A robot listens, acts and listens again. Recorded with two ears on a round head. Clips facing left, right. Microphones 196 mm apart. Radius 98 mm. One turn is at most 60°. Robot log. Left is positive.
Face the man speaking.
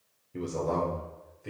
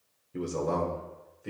cmd yaw -30
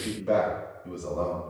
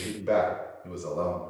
note: So it is at 155° right.
cmd yaw -60
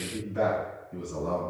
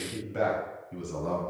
note: The man speaking is now 100° right.
cmd yaw -60
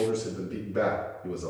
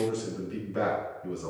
note: The man speaking is now 55° right.
cmd yaw -55
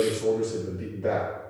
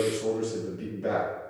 note: The man speaking is now 10° right.
cmd yaw -10
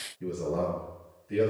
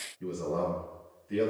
end: Facing the man speaking, over 4 m away.